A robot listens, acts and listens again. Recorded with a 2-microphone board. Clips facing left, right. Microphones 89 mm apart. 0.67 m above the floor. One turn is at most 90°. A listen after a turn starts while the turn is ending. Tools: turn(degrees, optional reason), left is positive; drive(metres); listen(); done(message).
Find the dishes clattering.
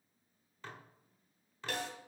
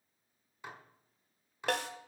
turn(degrees=-30)
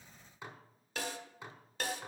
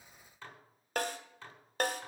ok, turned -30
turn(degrees=15, reason="So it is at 15° left.")
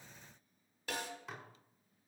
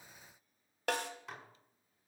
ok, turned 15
done("Found it: dishes clattering, straight ahead.")